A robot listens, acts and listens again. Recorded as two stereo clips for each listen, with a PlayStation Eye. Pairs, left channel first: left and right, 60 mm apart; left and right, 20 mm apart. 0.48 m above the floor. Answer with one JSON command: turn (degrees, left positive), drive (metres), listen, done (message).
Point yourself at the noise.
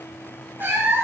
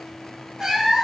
{"turn": -40}
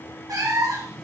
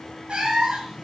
{"turn": -100}
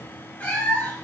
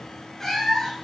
{"turn": 25}
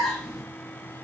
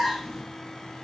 {"done": "Facing the cat meowing, 2 to 4 m away."}